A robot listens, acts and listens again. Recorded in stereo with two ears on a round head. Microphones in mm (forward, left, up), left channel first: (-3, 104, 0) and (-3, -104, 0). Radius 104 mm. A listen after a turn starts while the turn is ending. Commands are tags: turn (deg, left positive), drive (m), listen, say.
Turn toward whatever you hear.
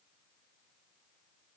<listen/>
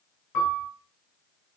<turn deg="55"/>
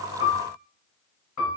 <turn deg="70"/>
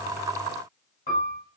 <turn deg="25"/>
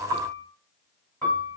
<say>Facing the piano, 1 to 2 m away.</say>